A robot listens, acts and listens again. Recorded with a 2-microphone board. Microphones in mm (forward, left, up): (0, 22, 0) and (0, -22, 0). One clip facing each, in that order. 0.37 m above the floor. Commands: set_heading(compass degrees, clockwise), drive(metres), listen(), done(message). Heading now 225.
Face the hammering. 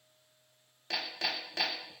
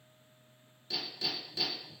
set_heading(165)
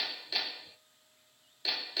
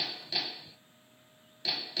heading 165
done("Found it: hammering, straight ahead.")